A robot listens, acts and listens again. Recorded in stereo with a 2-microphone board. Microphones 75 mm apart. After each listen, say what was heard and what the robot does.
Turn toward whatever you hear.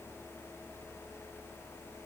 Keep listening.
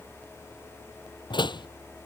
Turn 90° left.
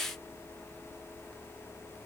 I heard a door slam from this way, but can't make it out now.